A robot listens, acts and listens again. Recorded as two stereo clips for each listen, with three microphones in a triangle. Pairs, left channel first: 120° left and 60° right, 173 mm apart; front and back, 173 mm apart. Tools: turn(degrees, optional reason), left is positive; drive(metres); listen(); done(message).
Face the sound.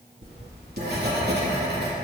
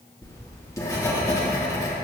turn(degrees=-70, reason="The writing: 70° right.")
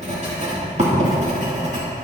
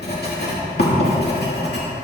turn(degrees=-15, reason="The writing is now 15° right.")
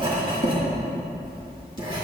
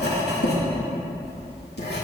done("Facing the writing, 2 to 4 m away.")